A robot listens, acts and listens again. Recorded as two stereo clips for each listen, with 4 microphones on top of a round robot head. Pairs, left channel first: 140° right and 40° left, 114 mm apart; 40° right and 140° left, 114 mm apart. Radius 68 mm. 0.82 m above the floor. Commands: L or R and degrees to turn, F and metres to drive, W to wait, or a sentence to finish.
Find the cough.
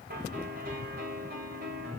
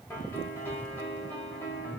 W
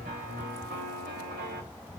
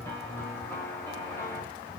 W
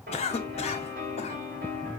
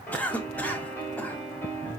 R120
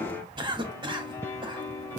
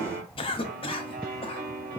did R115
Facing the cough, 1 to 2 m away.